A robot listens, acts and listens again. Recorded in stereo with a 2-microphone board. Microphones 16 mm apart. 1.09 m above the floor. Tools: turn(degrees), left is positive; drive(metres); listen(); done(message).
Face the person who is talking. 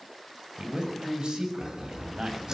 turn(degrees=-90)
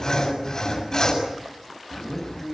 done("Found it: a man speaking, straight ahead, over 4 m away.")